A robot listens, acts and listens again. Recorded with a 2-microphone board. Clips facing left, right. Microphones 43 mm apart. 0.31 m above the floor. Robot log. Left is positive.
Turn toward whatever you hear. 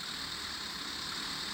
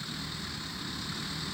cmd idle
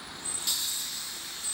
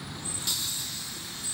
cmd idle
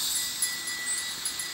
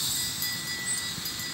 cmd yaw +30
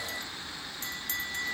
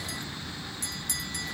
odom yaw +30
note: So it is at 140° left.
cmd yaw +140
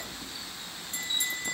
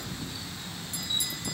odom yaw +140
note: The bell is now 50° left.
cmd yaw +50
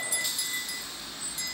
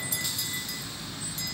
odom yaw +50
note: The bell is now 10° left.
cmd yaw +10
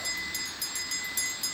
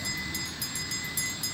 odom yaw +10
end: Found it: a bell, straight ahead.